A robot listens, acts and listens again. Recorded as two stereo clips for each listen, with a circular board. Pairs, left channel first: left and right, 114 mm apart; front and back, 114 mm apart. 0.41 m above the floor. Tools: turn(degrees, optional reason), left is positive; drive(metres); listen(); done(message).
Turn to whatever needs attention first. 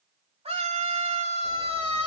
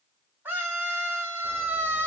turn(degrees=-110, reason="The scream: 110° right.")
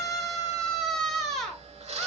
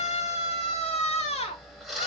done("Facing the scream, 1 to 2 m away.")